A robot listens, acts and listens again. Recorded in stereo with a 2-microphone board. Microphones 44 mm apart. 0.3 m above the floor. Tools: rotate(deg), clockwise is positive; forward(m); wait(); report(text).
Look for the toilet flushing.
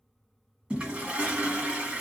rotate(25)
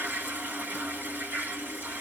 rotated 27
rotate(125)
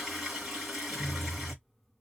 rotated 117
report("Facing the toilet flushing.")